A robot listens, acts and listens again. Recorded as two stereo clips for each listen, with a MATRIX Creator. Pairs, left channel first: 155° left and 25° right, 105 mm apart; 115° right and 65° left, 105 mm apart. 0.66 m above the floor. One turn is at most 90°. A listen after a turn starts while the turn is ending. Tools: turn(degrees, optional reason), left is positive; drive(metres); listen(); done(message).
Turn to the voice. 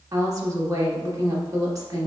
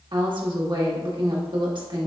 turn(degrees=30, reason="The woman speaking: 30° left.")
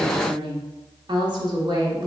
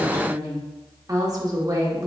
turn(degrees=15, reason="The woman speaking is now 15° left.")
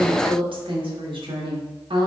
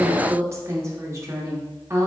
turn(degrees=10, reason="The woman speaking is now 10° left.")
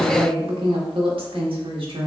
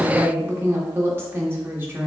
done("Facing the woman speaking.")